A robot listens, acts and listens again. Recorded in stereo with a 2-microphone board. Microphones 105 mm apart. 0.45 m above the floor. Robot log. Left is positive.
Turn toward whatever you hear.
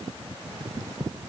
cmd idle
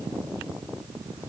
cmd idle
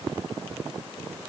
end: I can't make out anything.